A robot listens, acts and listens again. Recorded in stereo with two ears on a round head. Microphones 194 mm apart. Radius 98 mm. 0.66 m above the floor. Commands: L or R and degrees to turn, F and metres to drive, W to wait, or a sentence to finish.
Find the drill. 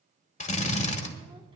L35
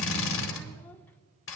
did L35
L115
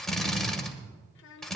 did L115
Found it: a drill, straight ahead, 1 to 2 m away.